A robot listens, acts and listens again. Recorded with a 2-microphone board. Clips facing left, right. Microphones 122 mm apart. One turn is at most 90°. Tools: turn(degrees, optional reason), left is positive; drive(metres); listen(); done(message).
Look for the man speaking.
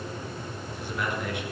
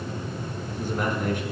turn(degrees=-40, reason="The man speaking: about 40° right or 140° right.")
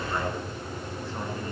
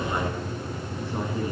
turn(degrees=-20, reason="So it is at 20° right.")
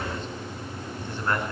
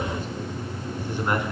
turn(degrees=-15, reason="The man speaking is now 15° right.")
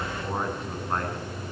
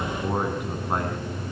turn(degrees=-15, reason="The man speaking is now 15° right.")
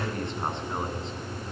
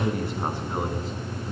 done("Found it: a man speaking, straight ahead.")